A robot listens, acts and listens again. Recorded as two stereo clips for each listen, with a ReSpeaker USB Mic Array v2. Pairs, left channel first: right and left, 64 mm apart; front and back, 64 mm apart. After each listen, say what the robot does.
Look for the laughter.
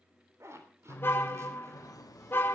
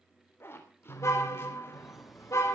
Turn 90° right.
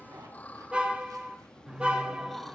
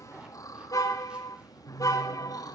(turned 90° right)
Facing the laughter, 2 to 4 m away.